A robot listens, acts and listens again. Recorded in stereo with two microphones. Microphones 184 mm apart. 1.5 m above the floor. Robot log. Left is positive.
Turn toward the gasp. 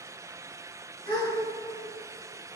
note: The gasp: about 55° left or 125° left.
cmd yaw +55
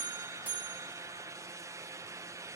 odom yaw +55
cmd idle
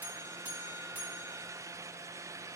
end: I heard a gasp, but can't make it out now. It was about straight ahead or 70° left.